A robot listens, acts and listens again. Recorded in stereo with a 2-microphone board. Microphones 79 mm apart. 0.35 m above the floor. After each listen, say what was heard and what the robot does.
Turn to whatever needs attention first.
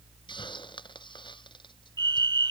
The fire alarm: about 65° right or 115° right. Turn 65° right.
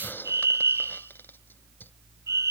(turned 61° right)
So it is at 40° right. Turn 40° right.
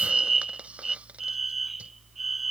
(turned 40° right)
Facing the fire alarm.